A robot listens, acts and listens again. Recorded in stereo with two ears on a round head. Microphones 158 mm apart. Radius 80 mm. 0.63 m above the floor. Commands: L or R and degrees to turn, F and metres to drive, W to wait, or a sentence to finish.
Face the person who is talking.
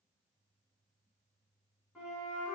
W
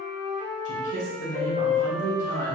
L45
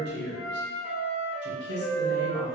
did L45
L85
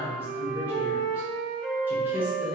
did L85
R15
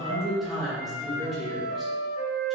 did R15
Found it: a man speaking, straight ahead, 1 to 2 m away.